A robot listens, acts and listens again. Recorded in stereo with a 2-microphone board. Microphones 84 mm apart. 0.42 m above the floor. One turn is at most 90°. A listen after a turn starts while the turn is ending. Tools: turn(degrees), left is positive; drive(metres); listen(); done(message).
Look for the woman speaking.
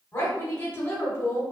turn(degrees=30)
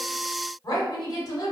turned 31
turn(degrees=90)
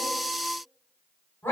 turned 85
turn(degrees=35)
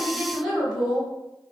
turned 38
done("Facing the woman speaking.")